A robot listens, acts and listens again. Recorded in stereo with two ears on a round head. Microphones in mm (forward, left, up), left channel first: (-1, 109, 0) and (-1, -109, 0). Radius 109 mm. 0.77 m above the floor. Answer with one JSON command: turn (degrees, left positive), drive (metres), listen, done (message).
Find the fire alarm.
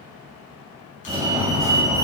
{"turn": -15}
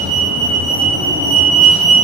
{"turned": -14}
{"turn": -155}
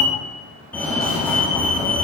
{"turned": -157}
{"turn": 10}
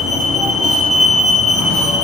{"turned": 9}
{"done": "Facing the fire alarm."}